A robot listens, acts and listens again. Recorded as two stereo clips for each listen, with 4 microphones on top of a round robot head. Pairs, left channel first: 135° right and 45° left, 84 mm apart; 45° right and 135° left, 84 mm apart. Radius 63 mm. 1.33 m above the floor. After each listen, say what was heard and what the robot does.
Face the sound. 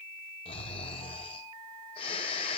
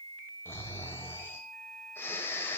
The snoring: 110° right. Turn 110° right.
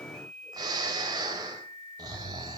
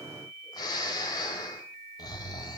Facing the snoring, 1 to 2 m away.